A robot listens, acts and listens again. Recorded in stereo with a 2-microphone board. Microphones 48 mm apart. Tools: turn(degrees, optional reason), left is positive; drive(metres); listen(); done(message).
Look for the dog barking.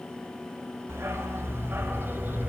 turn(degrees=-40, reason="The dog barking: about 40° right or 140° right.")
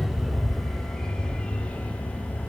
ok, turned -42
turn(degrees=40, reason="So it is at 40° left.")
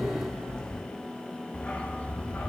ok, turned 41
turn(degrees=30, reason="The dog barking is now 30° left.")
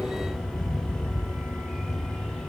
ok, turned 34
done("Found it: a dog barking, straight ahead, 2 to 4 m away.")